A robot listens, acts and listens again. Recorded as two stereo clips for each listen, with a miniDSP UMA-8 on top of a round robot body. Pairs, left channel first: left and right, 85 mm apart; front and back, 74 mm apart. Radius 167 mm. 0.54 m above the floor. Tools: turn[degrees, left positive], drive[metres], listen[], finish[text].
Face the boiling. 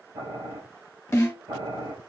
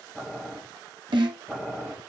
Thought: The boiling: 85° right.
Action: turn[-85]
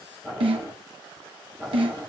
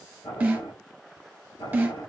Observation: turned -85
Thought: The boiling is now 15° left.
Action: turn[15]
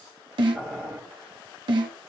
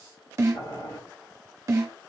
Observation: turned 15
Action: finish[Found it: boiling, straight ahead.]